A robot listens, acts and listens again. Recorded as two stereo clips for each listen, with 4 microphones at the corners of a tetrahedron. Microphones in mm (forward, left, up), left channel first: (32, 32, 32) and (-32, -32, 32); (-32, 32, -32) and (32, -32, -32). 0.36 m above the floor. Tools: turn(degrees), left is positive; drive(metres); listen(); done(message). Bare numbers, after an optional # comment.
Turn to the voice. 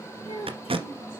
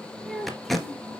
# The child speaking: 45° left.
turn(45)
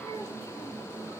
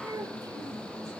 done("Found it: a child speaking, straight ahead.")